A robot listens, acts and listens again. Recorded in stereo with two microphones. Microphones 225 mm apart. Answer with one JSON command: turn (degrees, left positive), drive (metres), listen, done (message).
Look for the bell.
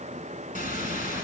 {"turn": 35}
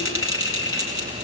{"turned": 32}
{"turn": 110}
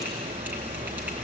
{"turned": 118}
{"turn": -10}
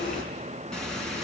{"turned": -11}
{"done": "Found it: a bell, straight ahead, over 4 m away."}